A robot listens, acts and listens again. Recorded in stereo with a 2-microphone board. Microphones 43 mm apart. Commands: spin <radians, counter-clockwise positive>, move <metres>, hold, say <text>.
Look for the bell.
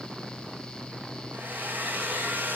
hold
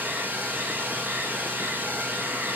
hold
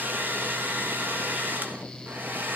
say I can't make out a bell, only a hair dryer.